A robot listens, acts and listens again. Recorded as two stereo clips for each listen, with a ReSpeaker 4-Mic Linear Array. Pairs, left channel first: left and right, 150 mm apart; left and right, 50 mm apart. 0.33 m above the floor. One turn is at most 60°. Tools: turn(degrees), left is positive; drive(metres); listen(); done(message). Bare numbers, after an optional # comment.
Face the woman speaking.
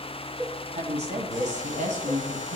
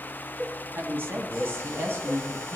# The woman speaking: about 60° right or 120° right.
turn(-60)
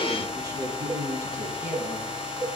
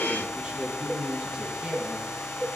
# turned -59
# So it is at 20° right.
turn(-20)
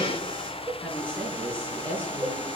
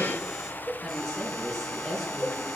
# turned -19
# The woman speaking is now 10° left.
turn(10)
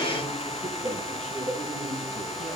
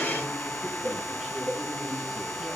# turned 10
listen()
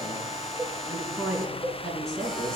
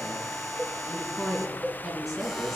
done("Found it: a woman speaking, straight ahead, 2 to 4 m away.")